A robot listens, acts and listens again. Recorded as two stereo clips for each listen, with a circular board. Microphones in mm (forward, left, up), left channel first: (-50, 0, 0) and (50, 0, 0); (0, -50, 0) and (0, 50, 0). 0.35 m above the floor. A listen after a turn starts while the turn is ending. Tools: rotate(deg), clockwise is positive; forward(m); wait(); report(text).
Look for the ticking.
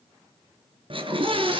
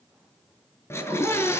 wait()
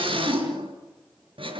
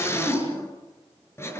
wait()
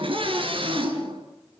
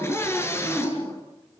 report("I can't make out ticking, only a scream.")